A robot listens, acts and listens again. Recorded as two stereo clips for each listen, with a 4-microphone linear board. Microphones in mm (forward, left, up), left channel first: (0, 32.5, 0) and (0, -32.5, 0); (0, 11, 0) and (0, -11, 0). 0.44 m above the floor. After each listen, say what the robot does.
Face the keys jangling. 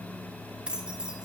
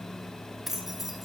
Turn 30° right.
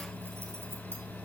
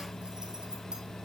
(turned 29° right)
Keep listening.
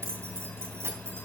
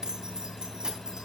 Turn 140° right.
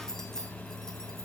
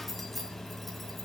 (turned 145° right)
Found it: keys jangling, straight ahead, 2 to 4 m away.